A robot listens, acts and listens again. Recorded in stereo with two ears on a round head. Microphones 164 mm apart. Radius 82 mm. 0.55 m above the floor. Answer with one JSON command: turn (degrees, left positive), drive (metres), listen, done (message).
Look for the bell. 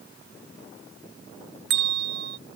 {"turn": -60}
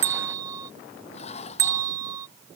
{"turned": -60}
{"turn": -20}
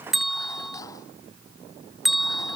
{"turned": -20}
{"done": "Found it: a bell, straight ahead."}